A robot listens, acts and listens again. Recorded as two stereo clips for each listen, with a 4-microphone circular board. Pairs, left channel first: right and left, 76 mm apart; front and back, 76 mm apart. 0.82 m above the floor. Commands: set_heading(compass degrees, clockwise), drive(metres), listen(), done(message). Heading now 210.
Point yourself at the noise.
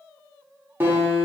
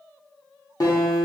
set_heading(180)
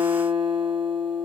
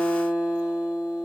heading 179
done("Found it: a guitar, straight ahead, 1 to 2 m away.")